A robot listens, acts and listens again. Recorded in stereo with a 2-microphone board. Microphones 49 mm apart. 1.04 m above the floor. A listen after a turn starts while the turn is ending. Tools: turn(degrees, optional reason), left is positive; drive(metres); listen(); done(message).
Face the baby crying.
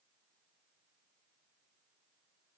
listen()
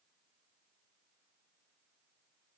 listen()
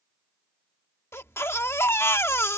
turn(degrees=60, reason="The baby crying: about 60° left or 120° left.")
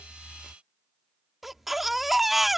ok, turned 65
done("Found it: a baby crying, straight ahead.")